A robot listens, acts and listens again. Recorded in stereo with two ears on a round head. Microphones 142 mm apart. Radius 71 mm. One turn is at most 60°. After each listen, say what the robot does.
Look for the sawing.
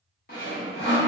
Turn 60° left.
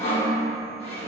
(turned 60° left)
Turn 45° left.
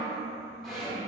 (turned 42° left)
Facing the sawing.